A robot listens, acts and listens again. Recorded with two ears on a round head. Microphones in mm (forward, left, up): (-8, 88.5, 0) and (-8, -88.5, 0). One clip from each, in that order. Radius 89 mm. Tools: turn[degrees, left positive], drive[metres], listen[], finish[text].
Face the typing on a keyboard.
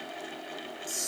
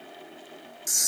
Action: listen[]
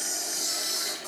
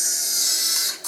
Action: listen[]
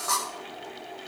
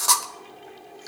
Action: finish[I can't make out typing on a keyboard, only a camera shutter.]